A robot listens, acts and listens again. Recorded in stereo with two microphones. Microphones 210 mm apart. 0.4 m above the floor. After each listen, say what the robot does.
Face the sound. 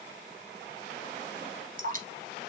Turn 45° right.
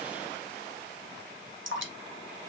Turn 90° right.
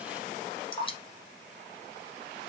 Turn 25° left.
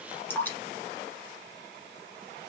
Turn 10° left.
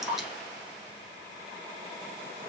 Found it: dripping, straight ahead.